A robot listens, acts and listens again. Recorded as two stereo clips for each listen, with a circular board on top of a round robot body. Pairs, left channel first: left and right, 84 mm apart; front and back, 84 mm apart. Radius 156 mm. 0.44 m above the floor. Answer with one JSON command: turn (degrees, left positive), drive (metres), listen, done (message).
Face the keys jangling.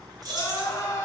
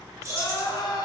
{"turn": -130}
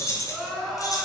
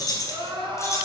{"turn": 55}
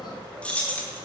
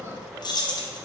{"turn": 25}
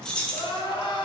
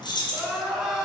{"turn": 15}
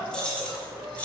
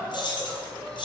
{"turn": 15}
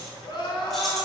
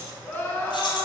{"listen": true}
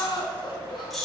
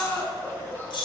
{"done": "Facing the keys jangling, 1 to 2 m away."}